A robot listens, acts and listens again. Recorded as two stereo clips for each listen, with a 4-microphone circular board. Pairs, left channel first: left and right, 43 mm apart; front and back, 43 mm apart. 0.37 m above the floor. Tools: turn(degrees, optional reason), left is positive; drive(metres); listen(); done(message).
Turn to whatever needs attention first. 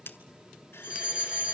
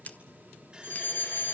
turn(degrees=-30, reason="The fire alarm: 30° right.")
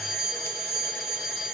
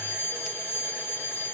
turn(degrees=-10, reason="The fire alarm is now 10° right.")
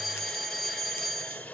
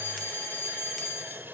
done("Found it: a fire alarm, straight ahead.")